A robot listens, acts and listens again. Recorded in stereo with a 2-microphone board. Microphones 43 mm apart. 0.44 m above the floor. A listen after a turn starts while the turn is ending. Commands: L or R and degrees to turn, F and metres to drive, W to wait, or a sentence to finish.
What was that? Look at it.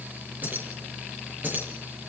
R40
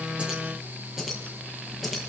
Found it: keys jangling, straight ahead, over 4 m away.